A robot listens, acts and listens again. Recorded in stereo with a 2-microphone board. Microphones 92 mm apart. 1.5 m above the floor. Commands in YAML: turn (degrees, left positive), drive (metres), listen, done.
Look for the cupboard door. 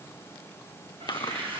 turn: -65
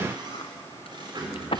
turn: -50
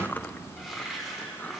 done: "Found it: a cupboard door, straight ahead."